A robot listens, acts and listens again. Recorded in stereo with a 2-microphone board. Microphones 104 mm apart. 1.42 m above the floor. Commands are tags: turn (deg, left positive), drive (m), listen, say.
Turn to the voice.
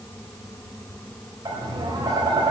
<listen/>
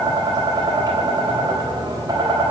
<listen/>
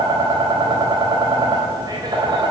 <say>I can't make out anyone speaking to turn to.</say>